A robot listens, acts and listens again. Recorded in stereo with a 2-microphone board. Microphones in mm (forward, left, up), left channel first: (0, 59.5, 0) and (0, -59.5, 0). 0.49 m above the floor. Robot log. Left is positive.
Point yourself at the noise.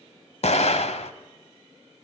cmd yaw +90
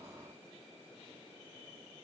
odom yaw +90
end: Facing where the explosion came from. I can't hear it now.